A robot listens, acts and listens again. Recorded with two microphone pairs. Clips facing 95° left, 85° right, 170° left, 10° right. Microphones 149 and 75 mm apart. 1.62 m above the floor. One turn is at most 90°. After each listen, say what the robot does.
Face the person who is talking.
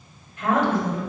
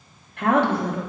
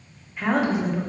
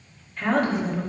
Turn 90° right.
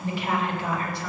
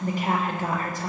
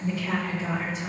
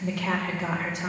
Turn 40° right.
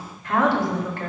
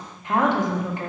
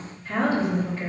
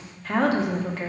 Turn 15° right.
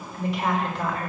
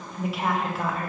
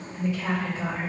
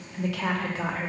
Found it: a woman speaking, straight ahead.